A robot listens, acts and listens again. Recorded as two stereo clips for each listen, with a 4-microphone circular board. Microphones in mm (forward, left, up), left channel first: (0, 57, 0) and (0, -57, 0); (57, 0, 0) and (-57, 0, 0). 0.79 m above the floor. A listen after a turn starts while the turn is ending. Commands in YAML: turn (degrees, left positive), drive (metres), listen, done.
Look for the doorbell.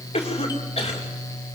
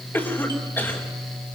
listen: true
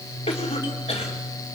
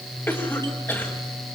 listen: true
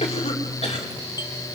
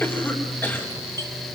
done: "I can't make out a doorbell to turn to."